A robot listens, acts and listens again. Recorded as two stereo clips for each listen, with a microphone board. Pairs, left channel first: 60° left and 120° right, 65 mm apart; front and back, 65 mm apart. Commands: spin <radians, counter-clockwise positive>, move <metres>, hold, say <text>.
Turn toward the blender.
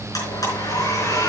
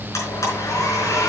spin 0.61
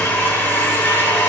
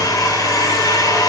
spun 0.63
say Found it: a blender, straight ahead, over 4 m away.